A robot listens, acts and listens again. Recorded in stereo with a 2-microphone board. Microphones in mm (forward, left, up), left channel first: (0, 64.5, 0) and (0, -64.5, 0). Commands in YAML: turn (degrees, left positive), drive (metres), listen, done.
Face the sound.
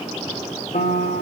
turn: 70
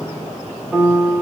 done: "Facing the piano, 1 to 2 m away."